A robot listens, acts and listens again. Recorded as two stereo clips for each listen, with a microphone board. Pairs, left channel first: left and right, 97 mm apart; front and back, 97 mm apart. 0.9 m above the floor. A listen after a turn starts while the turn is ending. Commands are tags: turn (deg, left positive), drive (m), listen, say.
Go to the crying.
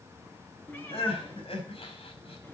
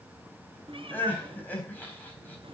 <turn deg="75"/>
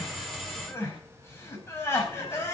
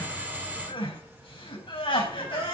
<turn deg="25"/>
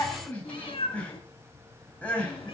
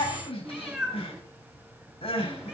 <turn deg="15"/>
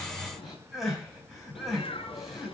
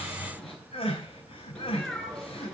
<drive m="1.0"/>
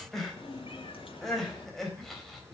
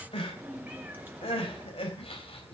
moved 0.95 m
<drive m="1.0"/>
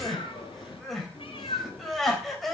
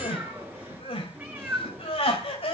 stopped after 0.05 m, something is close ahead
<say>Something is in my way. I am facing the crying but have not reached it.</say>